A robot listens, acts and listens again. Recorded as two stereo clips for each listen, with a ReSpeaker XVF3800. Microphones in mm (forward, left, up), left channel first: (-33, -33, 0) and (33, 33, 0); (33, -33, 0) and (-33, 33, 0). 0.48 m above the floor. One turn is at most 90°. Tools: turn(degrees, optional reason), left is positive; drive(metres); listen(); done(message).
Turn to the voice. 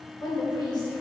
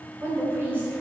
turn(degrees=-90, reason="The woman speaking: 160° right.")
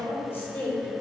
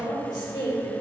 turn(degrees=-70, reason="The woman speaking is now 70° right.")
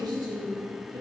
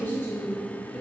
turn(degrees=30, reason="The woman speaking is now 30° left.")
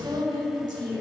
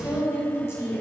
turn(degrees=15, reason="The woman speaking is now 15° left.")
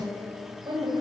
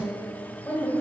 turn(degrees=10, reason="The woman speaking is now 10° left.")
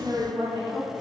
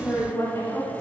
done("Facing the woman speaking, 2 to 4 m away.")